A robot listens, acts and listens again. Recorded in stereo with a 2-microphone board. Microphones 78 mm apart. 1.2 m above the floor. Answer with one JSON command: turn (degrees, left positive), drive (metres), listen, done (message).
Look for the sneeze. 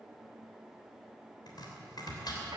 {"listen": true}
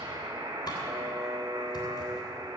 {"listen": true}
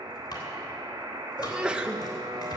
{"turn": -30}
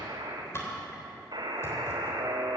{"listen": true}
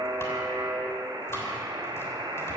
{"done": "I heard a sneeze, but can't make it out now. It was about 20° left or 140° right."}